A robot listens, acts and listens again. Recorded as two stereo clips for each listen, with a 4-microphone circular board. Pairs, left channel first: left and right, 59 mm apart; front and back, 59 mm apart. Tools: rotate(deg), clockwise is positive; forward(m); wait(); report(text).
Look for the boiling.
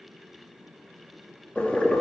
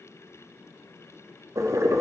rotate(-160)
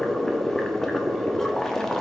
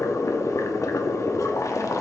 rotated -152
rotate(-10)
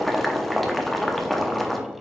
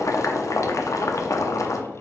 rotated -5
report("Found it: boiling, straight ahead, under 1 m away.")